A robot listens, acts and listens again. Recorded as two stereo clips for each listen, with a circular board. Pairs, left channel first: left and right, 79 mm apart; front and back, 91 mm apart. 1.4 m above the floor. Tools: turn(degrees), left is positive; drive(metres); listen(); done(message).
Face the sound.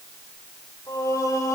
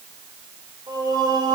turn(degrees=140)
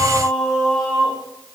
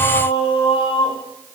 turn(degrees=10)
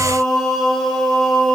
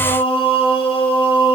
turn(degrees=10)
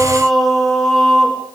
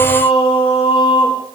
done("Facing the singing, 2 to 4 m away.")